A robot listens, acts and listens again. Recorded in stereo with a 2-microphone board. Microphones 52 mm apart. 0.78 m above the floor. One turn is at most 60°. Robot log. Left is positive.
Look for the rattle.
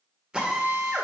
cmd idle
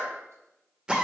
cmd idle
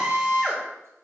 end: I can't make out a rattle, only a drill.